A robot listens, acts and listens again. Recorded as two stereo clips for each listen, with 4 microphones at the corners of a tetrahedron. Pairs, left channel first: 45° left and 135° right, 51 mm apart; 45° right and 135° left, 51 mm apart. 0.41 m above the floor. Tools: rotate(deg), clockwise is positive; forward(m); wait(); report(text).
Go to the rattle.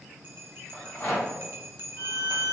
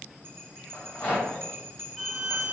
rotate(-10)
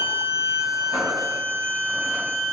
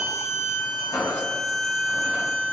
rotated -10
wait()
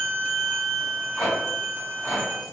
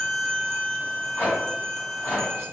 forward(1.0)
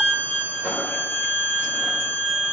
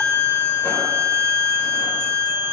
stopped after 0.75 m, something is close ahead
wait()
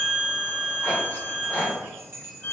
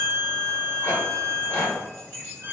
report("I am next to the rattle.")